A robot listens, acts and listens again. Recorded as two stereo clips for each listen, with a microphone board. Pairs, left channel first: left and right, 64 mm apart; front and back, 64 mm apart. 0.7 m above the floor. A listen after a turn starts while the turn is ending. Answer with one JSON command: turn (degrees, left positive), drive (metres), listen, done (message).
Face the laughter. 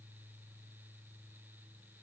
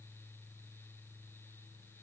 {"listen": true}
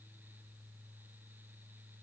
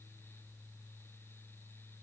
{"listen": true}
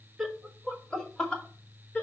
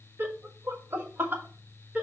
{"turn": 135}
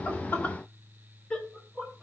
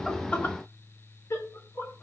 {"turn": 20}
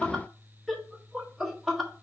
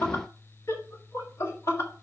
{"done": "Facing the laughter, 1 to 2 m away."}